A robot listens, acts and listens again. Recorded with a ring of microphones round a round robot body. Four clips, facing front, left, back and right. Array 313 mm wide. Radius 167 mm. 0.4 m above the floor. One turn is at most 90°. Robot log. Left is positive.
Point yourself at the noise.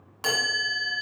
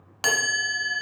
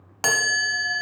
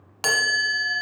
note: The chime: 170° left.
cmd yaw +90
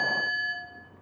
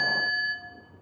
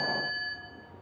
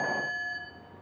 note: The chime is now 50° left.
cmd yaw +50
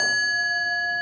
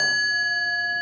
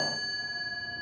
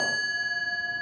note: The chime is now 10° left.
cmd yaw +10
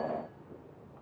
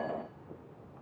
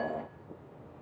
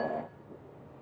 end: Facing the chime.